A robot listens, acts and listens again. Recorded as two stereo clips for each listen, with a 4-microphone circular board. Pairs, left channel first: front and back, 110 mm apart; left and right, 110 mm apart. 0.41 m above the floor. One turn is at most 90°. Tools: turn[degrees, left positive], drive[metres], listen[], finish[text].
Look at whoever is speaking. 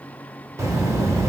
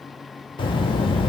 Thought: The child speaking: 120° left.
Action: turn[90]
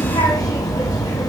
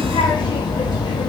Thought: The child speaking is now 50° left.
Action: turn[50]
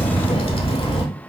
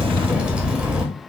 Thought: The child speaking is now 10° right.
Action: turn[-10]
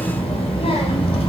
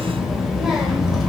Action: finish[Found it: a child speaking, straight ahead, under 1 m away.]